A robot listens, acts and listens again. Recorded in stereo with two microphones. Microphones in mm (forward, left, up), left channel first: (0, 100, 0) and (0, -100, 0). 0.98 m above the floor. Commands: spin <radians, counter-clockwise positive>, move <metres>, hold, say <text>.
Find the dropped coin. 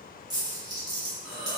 spin -0.35
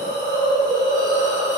hold
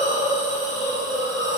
say I heard a dropped coin, but can't make it out now. It was about straight ahead or 140° right.